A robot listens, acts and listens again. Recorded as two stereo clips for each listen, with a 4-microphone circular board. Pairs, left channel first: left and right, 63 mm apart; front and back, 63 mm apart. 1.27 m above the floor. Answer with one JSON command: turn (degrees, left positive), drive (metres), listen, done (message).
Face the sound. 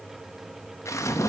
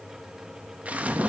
{"turn": 115}
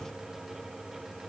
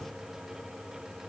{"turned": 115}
{"done": "Facing where the splash came from. I can't hear it now."}